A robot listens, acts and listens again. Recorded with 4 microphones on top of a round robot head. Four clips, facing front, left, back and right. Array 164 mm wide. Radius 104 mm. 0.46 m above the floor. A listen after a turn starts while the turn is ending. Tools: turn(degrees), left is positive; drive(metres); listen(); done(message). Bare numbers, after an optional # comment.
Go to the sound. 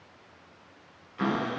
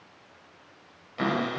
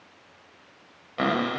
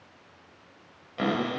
# The cupboard door: 160° right.
turn(-160)
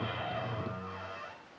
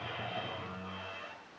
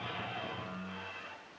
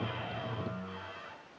# The cupboard door is now 30° left.
turn(30)
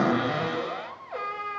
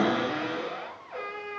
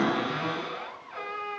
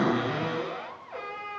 drive(1.0)
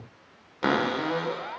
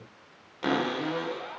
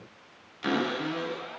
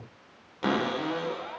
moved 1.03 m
drive(1.0)
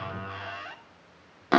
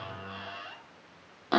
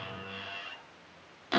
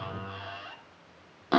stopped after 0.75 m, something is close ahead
done("I am next to the cupboard door.")